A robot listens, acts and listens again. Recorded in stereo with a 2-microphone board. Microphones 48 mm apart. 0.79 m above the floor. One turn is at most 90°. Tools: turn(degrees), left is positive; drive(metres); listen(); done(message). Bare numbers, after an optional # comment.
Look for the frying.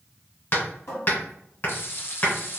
# The frying: about 55° left or 125° left.
turn(55)
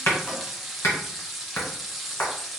done("Facing the frying.")